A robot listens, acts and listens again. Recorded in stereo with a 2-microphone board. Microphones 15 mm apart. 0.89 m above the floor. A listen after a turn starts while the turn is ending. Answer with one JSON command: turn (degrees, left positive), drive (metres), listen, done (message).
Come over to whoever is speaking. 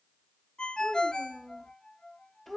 {"turn": 30}
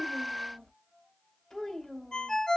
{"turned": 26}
{"turn": 125}
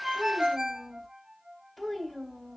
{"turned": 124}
{"drive": 1.0}
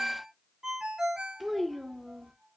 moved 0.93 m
{"drive": 1.0}
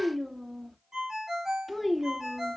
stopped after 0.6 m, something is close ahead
{"done": "Arrived at the child speaking, straight ahead."}